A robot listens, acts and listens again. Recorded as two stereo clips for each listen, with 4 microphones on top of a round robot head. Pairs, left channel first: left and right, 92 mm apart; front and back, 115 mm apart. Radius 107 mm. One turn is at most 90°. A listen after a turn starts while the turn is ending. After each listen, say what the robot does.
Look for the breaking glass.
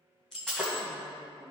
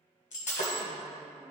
Found it: breaking glass, straight ahead.